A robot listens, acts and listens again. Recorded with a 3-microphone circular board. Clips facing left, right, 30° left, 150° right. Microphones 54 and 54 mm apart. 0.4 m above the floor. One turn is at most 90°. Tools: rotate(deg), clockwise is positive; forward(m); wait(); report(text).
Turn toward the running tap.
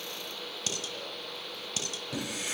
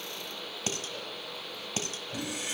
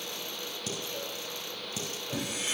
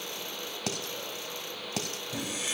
rotate(-80)
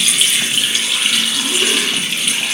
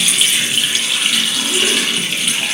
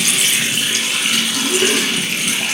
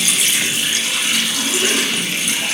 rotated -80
report("Found it: a running tap, straight ahead, over 4 m away.")